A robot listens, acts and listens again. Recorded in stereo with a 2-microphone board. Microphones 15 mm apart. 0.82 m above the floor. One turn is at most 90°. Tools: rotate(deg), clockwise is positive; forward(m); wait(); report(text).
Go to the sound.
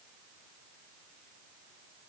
wait()
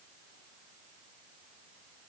wait()
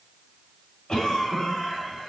rotate(-35)
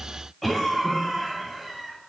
forward(1.0)
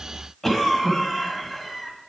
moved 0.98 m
forward(1.0)
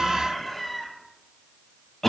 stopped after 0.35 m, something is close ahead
report("Arrived at the cough, straight ahead.")